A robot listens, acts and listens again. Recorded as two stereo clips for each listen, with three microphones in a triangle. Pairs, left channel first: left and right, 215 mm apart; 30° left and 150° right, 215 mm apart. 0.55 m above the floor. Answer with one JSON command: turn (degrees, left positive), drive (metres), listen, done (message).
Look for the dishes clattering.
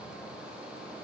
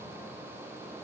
{"listen": true}
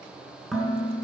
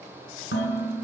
{"done": "Found it: dishes clattering, straight ahead, over 4 m away."}